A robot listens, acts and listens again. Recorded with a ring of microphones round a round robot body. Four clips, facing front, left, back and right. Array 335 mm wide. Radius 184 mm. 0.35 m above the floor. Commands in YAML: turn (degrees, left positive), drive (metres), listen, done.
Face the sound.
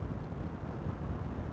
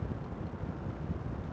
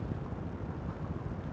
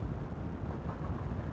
listen: true
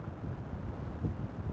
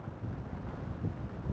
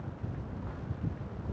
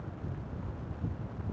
listen: true
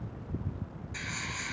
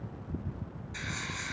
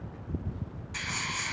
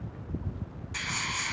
turn: -120
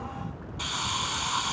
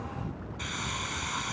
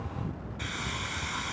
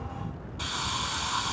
turn: -30
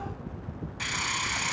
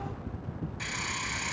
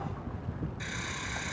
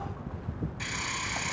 done: "Found it: a hiss, straight ahead, 1 to 2 m away."